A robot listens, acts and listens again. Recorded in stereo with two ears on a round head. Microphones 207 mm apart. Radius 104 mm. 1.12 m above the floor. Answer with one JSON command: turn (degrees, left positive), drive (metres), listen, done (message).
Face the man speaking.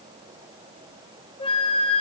{"listen": true}
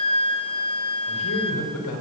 {"turn": 70}
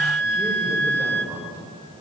{"turn": -10}
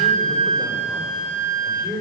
{"done": "Found it: a man speaking, straight ahead."}